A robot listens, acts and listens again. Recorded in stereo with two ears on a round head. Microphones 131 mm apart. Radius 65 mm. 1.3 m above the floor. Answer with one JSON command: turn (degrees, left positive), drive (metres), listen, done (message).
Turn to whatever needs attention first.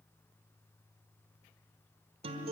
{"listen": true}
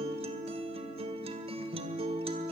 {"listen": true}
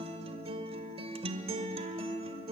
{"done": "I can't make out anything urgent, only a guitar."}